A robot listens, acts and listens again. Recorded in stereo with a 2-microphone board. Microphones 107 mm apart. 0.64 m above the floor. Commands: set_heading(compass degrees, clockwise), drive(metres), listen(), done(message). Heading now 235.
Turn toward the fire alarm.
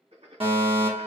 set_heading(285)
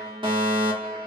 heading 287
set_heading(347)
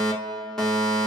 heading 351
done("Found it: a fire alarm, straight ahead, 2 to 4 m away.")